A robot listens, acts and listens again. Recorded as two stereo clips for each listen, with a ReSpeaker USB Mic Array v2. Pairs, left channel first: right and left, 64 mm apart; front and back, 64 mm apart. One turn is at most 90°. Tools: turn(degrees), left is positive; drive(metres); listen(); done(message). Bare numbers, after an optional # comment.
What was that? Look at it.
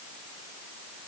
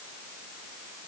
listen()
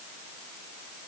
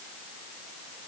listen()
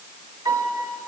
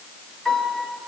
# The piano: 80° left.
turn(80)
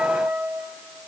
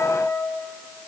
# The piano is now 10° left.
turn(10)
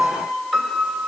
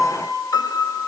done("Facing the piano.")